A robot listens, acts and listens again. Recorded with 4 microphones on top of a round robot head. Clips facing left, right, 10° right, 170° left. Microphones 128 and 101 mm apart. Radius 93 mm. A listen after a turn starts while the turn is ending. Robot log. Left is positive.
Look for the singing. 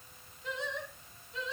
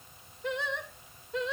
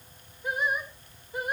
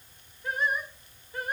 note: The singing: 85° right.
cmd yaw -85
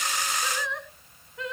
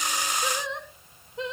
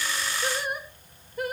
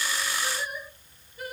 note: The singing is now 25° right.
cmd yaw -25
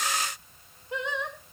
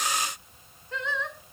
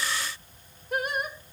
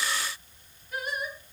note: The singing is now 15° left.
cmd yaw +15
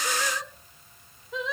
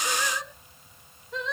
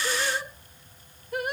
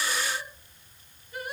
end: Found it: singing, straight ahead.